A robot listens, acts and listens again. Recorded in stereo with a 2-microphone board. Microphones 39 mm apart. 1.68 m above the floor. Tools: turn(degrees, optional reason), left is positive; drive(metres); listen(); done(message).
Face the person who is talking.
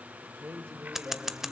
turn(degrees=-90)
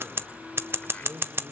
turn(degrees=-15, reason="So it is at 15° right.")
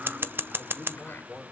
done("Found it: a man speaking, straight ahead.")